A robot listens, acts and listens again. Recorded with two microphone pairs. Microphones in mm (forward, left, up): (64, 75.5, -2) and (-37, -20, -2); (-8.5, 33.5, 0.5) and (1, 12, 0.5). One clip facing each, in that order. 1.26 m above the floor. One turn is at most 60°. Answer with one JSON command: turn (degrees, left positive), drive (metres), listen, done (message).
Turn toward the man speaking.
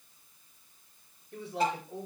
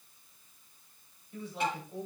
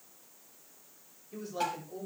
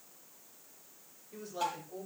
{"turn": 50}
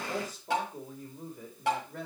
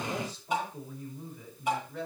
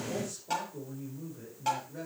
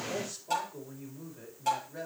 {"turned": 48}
{"done": "Facing the man speaking, over 4 m away."}